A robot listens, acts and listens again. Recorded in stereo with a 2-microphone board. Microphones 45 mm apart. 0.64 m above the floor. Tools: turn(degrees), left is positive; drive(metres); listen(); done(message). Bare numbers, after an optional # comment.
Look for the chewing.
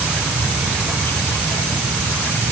listen()
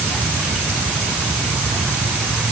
listen()
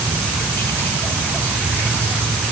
done("I can't make out chewing to turn to.")